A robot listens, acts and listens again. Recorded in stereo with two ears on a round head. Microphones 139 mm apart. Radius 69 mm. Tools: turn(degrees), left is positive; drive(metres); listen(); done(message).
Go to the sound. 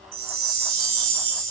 turn(degrees=-65)
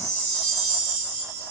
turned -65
turn(degrees=-45)
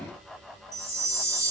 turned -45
turn(degrees=-20)
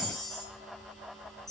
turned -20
drive(metres=1.0)
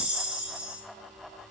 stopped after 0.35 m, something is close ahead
done("Blocked. The chime is further on, straight ahead.")